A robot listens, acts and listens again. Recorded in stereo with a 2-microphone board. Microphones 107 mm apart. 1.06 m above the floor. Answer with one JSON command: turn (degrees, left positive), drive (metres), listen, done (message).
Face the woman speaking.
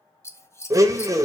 {"listen": true}
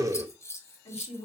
{"turn": 75}
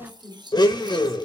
{"turn": 30}
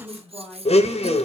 {"done": "Facing the woman speaking."}